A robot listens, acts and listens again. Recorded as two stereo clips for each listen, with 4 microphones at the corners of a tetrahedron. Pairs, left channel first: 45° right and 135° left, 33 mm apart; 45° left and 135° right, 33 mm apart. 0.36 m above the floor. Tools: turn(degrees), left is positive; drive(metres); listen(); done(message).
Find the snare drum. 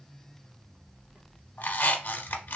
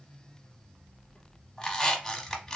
listen()
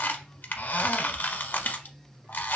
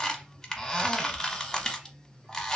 listen()
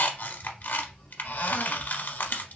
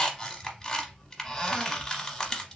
done("I can't make out a snare drum, only a squeak.")